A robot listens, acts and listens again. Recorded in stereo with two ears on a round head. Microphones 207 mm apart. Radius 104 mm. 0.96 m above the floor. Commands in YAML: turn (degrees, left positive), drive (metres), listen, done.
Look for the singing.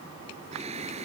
turn: -30
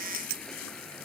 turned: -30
listen: true
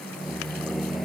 done: "Found it: singing, straight ahead."